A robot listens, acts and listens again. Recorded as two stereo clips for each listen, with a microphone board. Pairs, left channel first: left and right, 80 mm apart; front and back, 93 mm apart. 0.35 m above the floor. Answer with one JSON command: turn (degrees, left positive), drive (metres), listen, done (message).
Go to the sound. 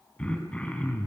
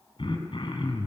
{"turn": 15}
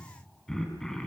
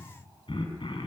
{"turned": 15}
{"drive": 1.0}
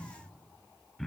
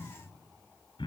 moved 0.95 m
{"drive": 1.0}
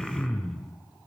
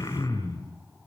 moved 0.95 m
{"drive": 1.0}
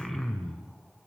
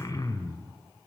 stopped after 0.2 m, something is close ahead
{"done": "Arrived at the throat clearing, straight ahead."}